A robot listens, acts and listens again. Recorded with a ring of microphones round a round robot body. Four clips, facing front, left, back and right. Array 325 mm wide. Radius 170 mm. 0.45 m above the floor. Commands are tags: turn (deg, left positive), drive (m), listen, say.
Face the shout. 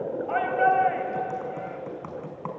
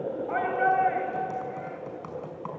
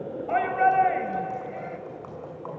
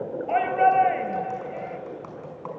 <turn deg="-130"/>
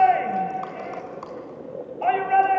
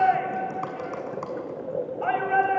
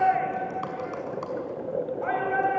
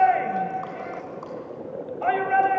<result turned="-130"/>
<turn deg="-35"/>
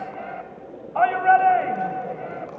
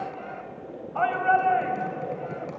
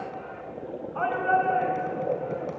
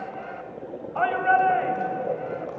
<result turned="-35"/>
<say>Found it: a shout, straight ahead.</say>